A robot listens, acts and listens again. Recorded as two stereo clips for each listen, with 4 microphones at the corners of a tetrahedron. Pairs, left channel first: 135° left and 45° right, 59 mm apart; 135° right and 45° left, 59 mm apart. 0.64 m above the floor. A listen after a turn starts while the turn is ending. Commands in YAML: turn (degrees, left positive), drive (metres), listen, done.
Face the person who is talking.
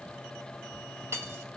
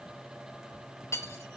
listen: true
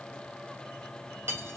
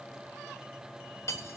listen: true
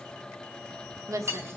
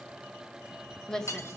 turn: -55
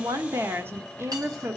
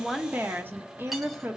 done: "Facing the woman speaking."